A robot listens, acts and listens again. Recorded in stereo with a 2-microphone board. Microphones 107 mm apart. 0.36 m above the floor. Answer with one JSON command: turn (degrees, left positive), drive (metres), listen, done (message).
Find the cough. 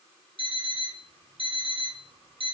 {"listen": true}
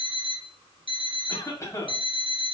{"turn": 30}
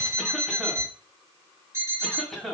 {"done": "Facing the cough."}